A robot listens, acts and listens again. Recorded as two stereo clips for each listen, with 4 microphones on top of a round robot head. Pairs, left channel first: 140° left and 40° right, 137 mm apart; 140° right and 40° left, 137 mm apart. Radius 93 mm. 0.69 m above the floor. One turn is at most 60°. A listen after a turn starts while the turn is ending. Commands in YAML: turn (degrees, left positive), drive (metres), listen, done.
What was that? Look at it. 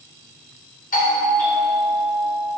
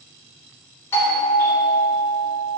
turn: 60
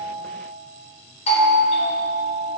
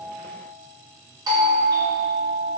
turn: 60
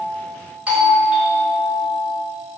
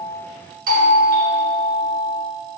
turn: 40
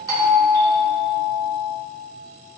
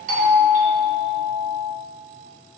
turn: 20
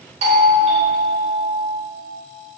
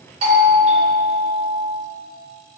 done: "Facing the doorbell."